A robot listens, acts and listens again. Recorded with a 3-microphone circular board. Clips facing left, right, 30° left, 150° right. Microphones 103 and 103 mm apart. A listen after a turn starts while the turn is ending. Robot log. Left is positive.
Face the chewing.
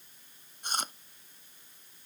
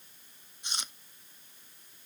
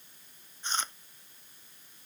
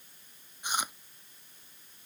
note: The chewing: 130° left.
cmd yaw +130
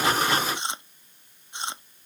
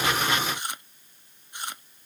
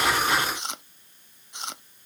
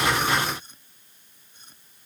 note: The chewing is now 20° left.
cmd yaw +20
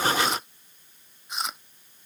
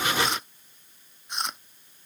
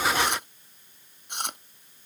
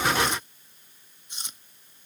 end: Found it: chewing, straight ahead.